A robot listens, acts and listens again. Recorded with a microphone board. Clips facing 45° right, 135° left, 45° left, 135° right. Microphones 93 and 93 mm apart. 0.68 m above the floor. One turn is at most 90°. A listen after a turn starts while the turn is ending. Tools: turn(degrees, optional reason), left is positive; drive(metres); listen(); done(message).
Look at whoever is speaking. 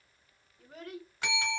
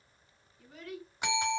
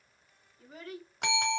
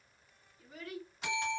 turn(degrees=-10, reason="The child speaking: 10° right.")
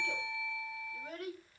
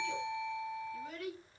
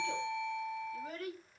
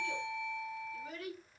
done("Facing the child speaking.")